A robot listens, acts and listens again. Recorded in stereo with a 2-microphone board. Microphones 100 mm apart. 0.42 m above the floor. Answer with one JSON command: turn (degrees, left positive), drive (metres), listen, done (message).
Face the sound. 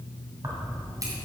{"turn": -40}
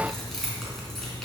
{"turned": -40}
{"done": "Found it: keys jangling, straight ahead, 2 to 4 m away."}